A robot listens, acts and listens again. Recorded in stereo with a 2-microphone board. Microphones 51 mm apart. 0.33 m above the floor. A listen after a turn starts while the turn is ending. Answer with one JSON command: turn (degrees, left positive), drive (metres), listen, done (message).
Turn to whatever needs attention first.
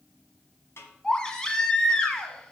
{"turn": 30}
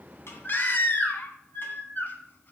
{"turn": 135}
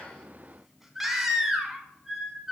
{"done": "Found it: a baby crying, straight ahead, 1 to 2 m away."}